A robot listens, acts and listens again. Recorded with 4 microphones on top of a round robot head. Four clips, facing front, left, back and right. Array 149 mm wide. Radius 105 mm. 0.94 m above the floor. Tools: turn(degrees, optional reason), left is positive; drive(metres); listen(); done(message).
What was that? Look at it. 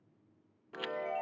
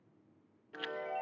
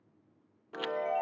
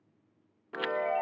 turn(degrees=-115, reason="The chime: 115° right.")
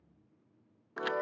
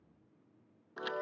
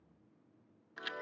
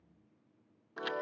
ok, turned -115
done("Facing the chime, 1 to 2 m away.")